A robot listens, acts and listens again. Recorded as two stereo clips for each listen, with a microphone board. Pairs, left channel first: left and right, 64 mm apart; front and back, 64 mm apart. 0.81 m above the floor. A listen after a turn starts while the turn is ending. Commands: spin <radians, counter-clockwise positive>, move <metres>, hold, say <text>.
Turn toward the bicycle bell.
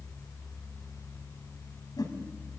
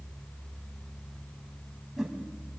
hold
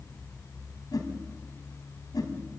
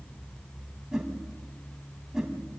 hold
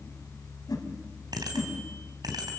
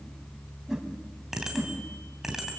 spin -1.66
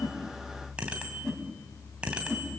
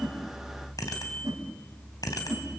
spin -0.26
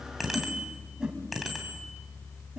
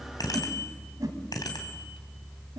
say Found it: a bicycle bell, straight ahead, 2 to 4 m away.